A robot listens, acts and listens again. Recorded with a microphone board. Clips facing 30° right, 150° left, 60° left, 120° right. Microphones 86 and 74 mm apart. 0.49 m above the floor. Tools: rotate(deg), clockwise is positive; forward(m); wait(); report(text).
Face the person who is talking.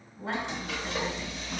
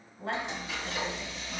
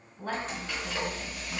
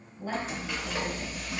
rotate(-45)
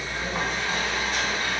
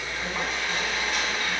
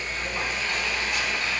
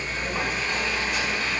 wait()
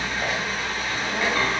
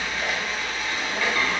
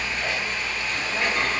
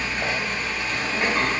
wait()
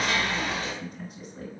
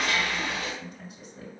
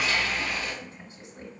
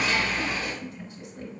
report("Facing the woman speaking.")